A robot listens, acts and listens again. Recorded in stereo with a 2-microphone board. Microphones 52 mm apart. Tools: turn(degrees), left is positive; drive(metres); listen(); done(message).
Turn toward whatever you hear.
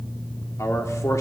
turn(degrees=90)
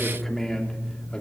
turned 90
listen()
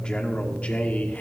turn(degrees=30)
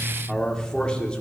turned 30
turn(degrees=20)
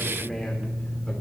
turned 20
listen()
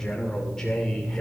turn(degrees=10)
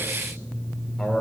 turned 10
done("Found it: a man speaking, straight ahead, 2 to 4 m away.")